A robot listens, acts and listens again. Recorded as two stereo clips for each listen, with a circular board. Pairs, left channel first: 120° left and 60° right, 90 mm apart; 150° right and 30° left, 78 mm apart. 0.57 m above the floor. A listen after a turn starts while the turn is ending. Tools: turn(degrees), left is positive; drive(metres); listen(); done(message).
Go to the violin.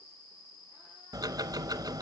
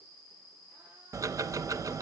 listen()
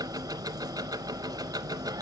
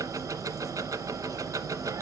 listen()
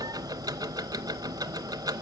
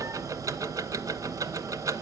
done("I can't make out a violin, only ticking.")